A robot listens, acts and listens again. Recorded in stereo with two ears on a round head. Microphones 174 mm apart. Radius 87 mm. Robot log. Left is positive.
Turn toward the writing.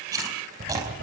note: The writing: about 55° right or 125° right.
cmd yaw -55
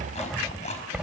end: Found it: writing, straight ahead, 2 to 4 m away.